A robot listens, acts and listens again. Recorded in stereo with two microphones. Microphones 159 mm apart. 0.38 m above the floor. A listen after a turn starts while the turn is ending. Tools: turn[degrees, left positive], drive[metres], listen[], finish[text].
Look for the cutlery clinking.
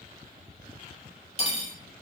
Thought: The cutlery clinking: about 40° left or 140° left.
Action: turn[40]
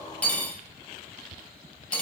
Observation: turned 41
Thought: So it is at 10° left.
Action: turn[10]
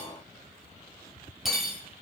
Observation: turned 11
Action: finish[Facing the cutlery clinking.]